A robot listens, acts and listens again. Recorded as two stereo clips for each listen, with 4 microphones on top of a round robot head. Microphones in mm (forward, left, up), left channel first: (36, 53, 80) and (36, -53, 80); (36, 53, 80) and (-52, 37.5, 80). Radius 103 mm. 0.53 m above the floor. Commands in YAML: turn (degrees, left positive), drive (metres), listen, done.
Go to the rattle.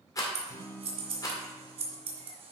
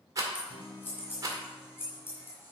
turn: 145
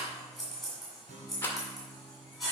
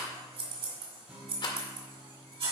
turn: 25
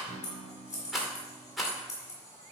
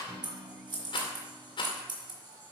drive: 1.0
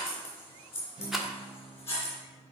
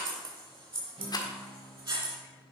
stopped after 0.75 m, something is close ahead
done: "Arrived at the rattle, straight ahead."